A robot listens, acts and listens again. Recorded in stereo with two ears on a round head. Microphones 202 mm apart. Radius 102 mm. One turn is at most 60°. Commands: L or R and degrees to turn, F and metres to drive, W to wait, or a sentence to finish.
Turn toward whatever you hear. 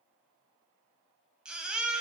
R30
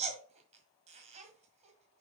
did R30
R60
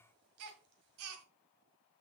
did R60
R60
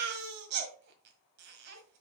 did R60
R50
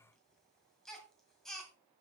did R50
Found it: a baby crying, straight ahead.